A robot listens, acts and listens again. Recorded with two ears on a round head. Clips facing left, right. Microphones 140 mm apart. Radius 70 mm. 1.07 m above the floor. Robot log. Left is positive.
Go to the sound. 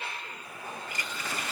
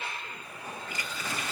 cmd yaw -90
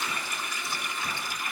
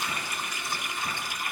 note: So it is at 15° right.
cmd yaw -15
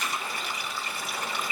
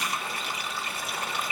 cmd fwd 1.0
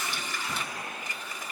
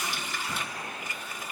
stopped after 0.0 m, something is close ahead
note: The running tap is now 10° right.
cmd yaw -10
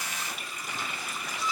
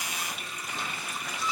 end: Blocked. The running tap is further on, straight ahead.